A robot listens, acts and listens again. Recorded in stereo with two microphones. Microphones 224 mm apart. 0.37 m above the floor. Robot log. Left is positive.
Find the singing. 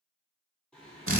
cmd yaw +30
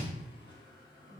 note: So it is at 165° left.
cmd yaw +165
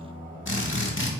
note: The singing is now 10° left.
cmd yaw +10
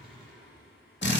end: Facing the singing, 2 to 4 m away.